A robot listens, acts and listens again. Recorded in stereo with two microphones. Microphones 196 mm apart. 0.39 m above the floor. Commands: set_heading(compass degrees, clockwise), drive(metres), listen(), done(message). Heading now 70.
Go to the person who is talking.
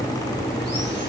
listen()
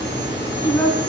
set_heading(40)
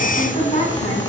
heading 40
set_heading(260)
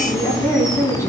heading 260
set_heading(245)
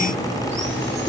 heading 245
listen()
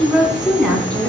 drive(1.0)
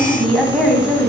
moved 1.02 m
drive(1.0)
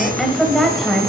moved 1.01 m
drive(1.0)
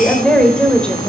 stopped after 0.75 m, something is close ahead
done("I am next to the woman speaking.")